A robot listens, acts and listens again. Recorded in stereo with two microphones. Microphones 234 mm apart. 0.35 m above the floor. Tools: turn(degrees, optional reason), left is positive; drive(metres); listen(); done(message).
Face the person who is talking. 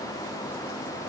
listen()
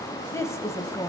turn(degrees=30)
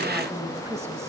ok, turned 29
turn(degrees=-15, reason="So it is at 15° right.")
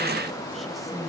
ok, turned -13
done("Facing the woman speaking.")